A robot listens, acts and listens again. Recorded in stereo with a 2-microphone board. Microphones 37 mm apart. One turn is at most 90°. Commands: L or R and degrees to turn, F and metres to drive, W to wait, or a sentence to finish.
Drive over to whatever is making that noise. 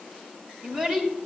R40
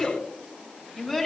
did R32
F1.0
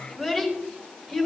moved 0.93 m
F1.0
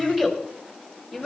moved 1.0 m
R10
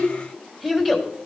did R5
F1.0
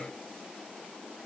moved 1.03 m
W
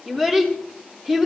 R10
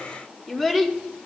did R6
F1.0
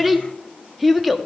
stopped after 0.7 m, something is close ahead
Arrived at the child speaking, straight ahead.